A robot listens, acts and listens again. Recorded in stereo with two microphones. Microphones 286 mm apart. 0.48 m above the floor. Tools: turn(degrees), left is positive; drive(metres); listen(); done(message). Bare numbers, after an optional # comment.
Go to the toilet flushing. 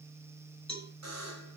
listen()
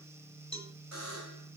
listen()
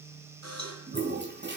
# The toilet flushing: about 35° right or 145° right.
turn(-35)
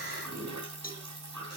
# So it is at 105° right.
turn(-105)
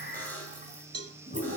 # The toilet flushing is now 25° right.
turn(-25)
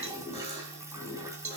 # The toilet flushing is now 10° right.
turn(-10)
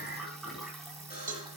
drive(1.0)
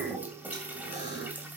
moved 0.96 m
drive(1.0)
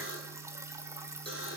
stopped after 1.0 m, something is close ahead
# The toilet flushing is now 10° right.
turn(-10)
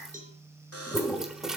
done("I am next to the toilet flushing.")